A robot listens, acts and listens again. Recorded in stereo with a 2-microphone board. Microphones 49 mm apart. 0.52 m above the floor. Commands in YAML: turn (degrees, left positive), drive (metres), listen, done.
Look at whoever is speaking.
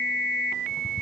listen: true
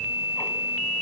listen: true
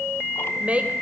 turn: -30
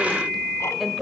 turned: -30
done: "Found it: a woman speaking, straight ahead, 2 to 4 m away."